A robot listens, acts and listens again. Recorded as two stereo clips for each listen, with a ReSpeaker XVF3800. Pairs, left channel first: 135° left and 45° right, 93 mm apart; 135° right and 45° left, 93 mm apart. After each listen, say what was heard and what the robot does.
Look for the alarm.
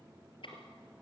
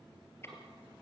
Keep listening.
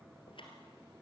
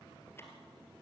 Keep listening.
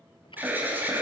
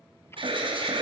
The alarm: 25° left. Turn 25° left.
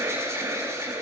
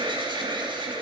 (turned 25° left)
The alarm is now 15° left. Turn 15° left.
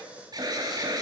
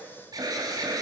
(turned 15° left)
Found it: an alarm, straight ahead, 2 to 4 m away.